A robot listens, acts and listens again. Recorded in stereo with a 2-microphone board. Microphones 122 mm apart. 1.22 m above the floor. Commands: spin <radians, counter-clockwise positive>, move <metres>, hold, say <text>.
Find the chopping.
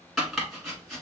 spin 0.52
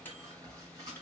hold
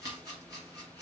spin -0.52
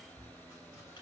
hold
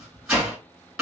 say Found it: chopping, straight ahead, 2 to 4 m away.